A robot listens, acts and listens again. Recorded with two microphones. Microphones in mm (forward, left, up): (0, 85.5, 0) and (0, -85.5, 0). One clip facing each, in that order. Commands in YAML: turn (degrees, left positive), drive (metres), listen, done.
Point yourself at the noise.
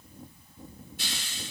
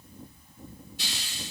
turn: 55
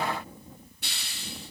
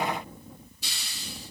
turn: 70
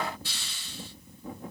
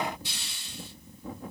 turn: -20
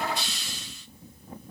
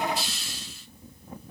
done: "Found it: a hiss, straight ahead, 1 to 2 m away."